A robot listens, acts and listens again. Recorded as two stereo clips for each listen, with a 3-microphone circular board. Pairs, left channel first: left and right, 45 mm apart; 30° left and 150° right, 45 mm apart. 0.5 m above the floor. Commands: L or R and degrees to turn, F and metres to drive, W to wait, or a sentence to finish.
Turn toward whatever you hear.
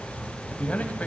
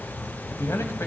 L35
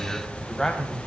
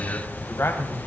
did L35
L10
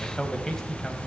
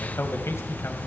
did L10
L10
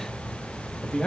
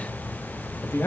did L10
L15
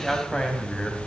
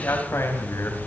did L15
Facing the man speaking.